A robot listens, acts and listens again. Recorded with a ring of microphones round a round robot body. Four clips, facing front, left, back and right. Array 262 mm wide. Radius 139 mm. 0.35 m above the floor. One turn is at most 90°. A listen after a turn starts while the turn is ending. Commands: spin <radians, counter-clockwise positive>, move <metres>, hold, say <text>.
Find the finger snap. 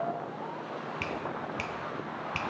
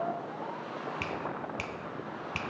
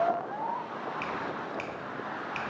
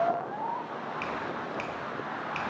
spin 0.79
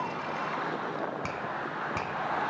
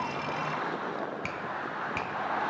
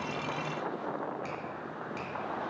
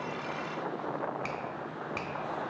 spin 0.35
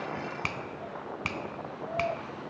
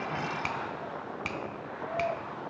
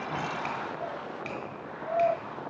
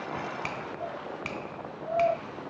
say Facing the finger snap.